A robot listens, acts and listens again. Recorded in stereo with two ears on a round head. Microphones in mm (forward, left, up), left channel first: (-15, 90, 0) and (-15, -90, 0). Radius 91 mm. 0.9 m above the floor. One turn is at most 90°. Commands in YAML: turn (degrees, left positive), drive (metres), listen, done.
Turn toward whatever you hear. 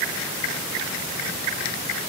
listen: true
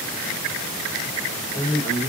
turn: 25
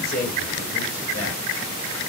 turn: 90
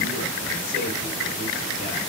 turn: 40
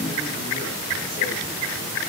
listen: true
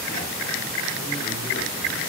done: "Facing where the man speaking came from. I can't hear it now."